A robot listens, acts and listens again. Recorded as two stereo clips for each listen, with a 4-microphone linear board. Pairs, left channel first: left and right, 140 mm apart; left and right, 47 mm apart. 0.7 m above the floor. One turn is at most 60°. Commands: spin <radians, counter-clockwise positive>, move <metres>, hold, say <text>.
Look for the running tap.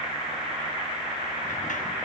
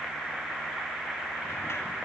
hold
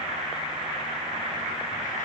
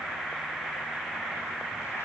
hold
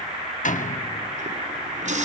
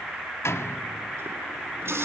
spin -1.05
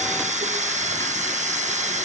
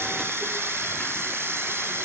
spin -0.96
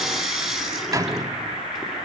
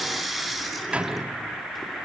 say Found it: a running tap, straight ahead, over 4 m away.